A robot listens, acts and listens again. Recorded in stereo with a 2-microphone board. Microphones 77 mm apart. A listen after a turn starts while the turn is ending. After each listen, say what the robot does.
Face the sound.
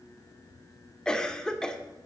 Turn 30° left.
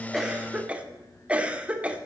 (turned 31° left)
Turn 20° right.
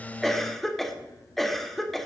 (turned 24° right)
Found it: a cough, straight ahead, 1 to 2 m away.